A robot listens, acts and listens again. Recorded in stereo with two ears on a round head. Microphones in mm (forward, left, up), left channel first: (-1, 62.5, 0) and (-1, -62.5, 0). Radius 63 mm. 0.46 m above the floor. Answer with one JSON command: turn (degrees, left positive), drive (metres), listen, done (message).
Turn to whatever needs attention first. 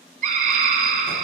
{"turn": -55}
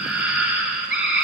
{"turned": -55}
{"turn": -10}
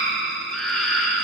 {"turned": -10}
{"done": "Facing the scream."}